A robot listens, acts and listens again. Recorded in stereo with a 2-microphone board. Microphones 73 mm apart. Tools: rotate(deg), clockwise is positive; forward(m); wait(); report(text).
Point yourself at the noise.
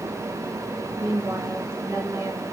rotate(45)
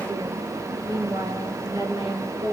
rotate(90)
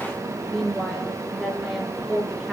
report("Found it: a woman speaking, straight ahead.")